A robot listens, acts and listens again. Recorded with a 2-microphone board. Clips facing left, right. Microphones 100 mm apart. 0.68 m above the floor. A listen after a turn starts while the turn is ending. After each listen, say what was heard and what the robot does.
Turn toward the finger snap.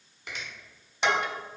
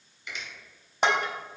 The finger snap: about 60° left or 120° left. Turn 60° left.
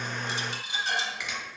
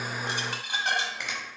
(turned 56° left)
So it is at 10° left. Turn 10° left.
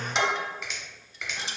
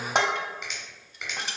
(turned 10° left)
Facing the finger snap.